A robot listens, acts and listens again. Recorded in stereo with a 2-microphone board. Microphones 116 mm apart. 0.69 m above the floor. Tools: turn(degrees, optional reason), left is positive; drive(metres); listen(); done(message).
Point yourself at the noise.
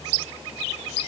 listen()
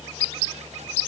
listen()
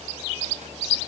done("I can't make out anything.")